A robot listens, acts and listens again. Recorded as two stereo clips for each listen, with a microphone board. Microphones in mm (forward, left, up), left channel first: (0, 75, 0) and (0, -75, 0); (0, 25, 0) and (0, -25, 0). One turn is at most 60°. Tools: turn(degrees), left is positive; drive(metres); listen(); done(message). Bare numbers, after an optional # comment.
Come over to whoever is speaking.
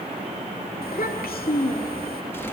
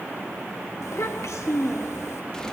turn(60)
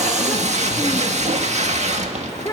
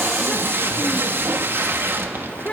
# So it is at 25° left.
turn(25)
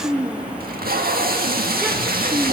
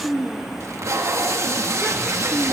# The child speaking is now 10° right.
turn(-10)
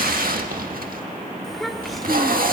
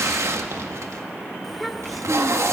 drive(1.0)
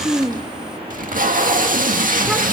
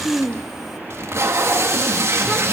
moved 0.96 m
drive(1.0)
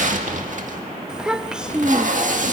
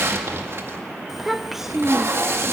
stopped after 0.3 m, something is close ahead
done("Arrived at the child speaking, straight ahead.")